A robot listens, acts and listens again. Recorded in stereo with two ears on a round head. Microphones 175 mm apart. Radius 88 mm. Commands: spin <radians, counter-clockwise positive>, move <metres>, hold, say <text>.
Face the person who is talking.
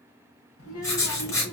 spin 1.57
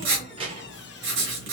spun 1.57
spin -0.52
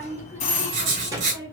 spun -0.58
spin -0.35
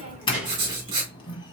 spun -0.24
say Facing the child speaking, 2 to 4 m away.